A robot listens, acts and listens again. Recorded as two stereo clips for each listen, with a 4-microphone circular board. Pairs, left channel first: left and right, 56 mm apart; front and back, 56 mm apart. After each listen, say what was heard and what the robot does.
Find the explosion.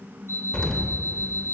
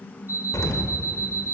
The explosion: 15° left. Turn 15° left.
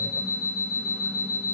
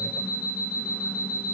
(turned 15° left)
I heard an explosion from this way, but can't make it out now.